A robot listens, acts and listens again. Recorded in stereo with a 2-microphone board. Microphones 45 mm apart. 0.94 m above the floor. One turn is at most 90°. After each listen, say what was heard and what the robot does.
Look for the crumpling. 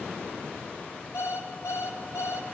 Keep listening.
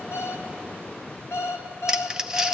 Turn 30° right.
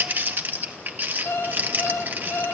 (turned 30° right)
So it is at 135° right. Turn 90° right.
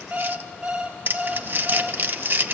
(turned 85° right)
The crumpling is now 50° right. Turn 50° right.
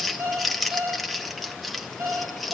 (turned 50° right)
Facing the crumpling.